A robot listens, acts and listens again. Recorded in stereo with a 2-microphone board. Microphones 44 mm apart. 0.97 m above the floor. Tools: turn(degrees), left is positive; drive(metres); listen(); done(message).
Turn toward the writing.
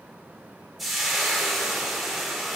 listen()
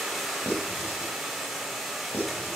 turn(degrees=70)
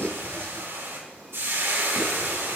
turn(degrees=40)
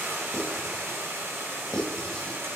turn(degrees=10)
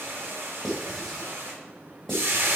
done("Found it: writing, straight ahead, 2 to 4 m away.")